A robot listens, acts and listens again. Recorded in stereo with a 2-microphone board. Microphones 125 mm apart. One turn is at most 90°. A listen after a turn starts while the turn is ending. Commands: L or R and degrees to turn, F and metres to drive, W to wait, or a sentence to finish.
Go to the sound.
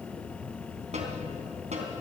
R65
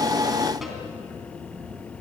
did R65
W
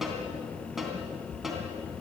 F1.0
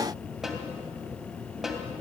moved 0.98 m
F1.0
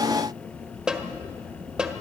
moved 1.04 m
F1.0
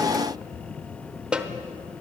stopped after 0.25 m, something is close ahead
R10
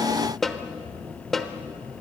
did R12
I am next to the snare drum.